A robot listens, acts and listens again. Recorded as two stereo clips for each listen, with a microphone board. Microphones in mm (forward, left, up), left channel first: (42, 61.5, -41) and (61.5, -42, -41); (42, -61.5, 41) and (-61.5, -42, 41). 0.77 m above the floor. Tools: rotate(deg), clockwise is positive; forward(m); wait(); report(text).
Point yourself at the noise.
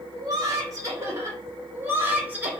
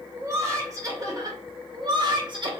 rotate(155)
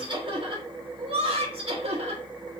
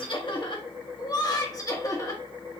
rotate(70)
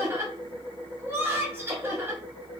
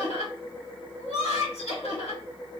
rotate(10)
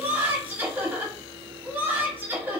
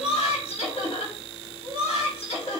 report("Found it: laughter, straight ahead, 1 to 2 m away.")